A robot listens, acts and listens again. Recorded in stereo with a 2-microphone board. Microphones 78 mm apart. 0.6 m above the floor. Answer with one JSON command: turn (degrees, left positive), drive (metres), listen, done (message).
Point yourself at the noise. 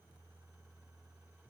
{"listen": true}
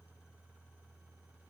{"listen": true}
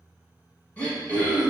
{"turn": 20}
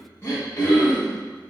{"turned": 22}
{"turn": 140}
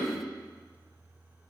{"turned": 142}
{"done": "Facing the throat clearing."}